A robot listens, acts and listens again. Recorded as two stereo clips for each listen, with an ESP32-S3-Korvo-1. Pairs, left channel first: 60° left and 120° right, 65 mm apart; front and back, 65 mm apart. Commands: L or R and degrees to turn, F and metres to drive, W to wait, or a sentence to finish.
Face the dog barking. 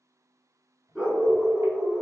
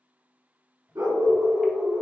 L160
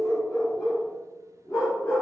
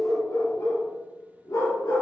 L25
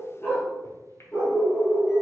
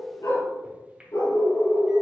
L10
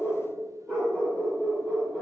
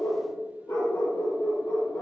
Found it: a dog barking, straight ahead, over 4 m away.